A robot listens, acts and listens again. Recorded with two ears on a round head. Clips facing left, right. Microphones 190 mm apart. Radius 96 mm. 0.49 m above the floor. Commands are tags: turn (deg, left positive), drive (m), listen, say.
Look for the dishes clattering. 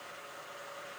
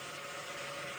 <listen/>
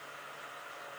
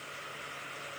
<listen/>
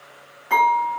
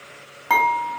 <turn deg="-75"/>
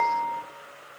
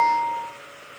<turn deg="-30"/>
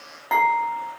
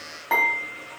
<say>Facing the dishes clattering.</say>